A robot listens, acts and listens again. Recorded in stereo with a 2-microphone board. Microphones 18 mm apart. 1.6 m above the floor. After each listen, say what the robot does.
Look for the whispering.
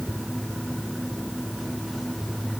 Keep listening.
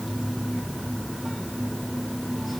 Keep listening.
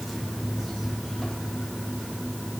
I can't make out whispering to turn to.